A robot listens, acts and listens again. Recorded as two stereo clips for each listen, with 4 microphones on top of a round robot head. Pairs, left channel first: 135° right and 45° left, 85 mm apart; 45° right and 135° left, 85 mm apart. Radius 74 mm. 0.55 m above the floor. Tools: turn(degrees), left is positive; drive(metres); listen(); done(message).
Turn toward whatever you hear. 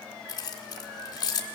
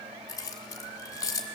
turn(degrees=-95)
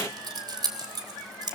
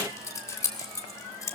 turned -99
done("Found it: keys jangling, straight ahead, 1 to 2 m away.")